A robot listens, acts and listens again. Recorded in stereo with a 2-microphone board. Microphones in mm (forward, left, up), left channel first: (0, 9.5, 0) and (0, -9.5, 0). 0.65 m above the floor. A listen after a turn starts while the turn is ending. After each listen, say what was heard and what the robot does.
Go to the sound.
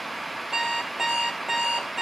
The alarm clock: about 25° right or 155° right. Turn 25° right.
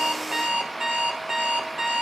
So it is at 135° right. Turn 135° right.
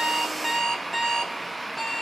Drive 1.0 m forward.
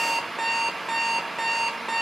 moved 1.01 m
Drive 1.0 m forward.
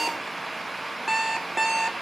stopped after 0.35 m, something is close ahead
I am next to the alarm clock.